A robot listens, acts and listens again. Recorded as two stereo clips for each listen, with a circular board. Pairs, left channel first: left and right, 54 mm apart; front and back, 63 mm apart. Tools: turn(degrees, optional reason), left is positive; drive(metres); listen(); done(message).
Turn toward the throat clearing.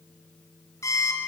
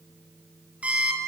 listen()
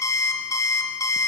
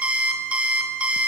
listen()
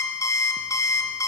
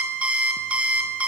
done("I can't make out throat clearing to turn to.")